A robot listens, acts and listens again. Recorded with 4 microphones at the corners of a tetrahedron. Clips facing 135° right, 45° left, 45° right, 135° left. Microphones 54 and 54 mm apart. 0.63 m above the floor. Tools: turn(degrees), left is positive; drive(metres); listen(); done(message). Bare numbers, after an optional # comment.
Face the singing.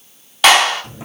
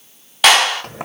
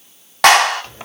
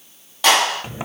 listen()
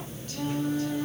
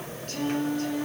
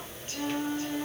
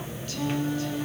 # The singing: 15° left.
turn(15)
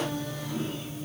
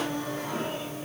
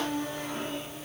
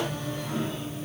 listen()
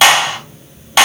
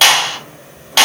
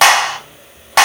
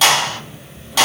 listen()
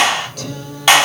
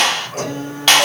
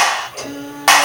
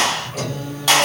done("Found it: singing, straight ahead.")